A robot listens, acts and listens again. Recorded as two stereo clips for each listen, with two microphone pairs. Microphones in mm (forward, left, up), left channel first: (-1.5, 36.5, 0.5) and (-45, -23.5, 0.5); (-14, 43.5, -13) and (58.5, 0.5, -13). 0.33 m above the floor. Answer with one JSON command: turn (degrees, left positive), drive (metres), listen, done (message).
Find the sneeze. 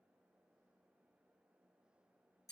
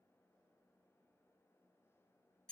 {"listen": true}
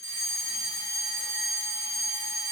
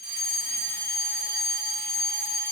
{"listen": true}
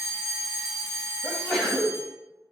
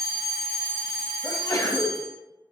{"turn": 130}
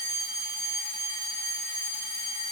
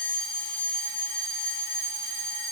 {"done": "Facing where the sneeze came from. I can't hear it now."}